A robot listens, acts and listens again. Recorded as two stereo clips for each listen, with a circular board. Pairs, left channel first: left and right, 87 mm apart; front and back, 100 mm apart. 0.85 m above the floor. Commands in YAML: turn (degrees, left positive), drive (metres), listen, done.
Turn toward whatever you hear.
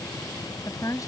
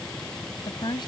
turn: 40
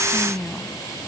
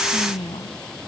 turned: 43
done: "Found it: a woman speaking, straight ahead."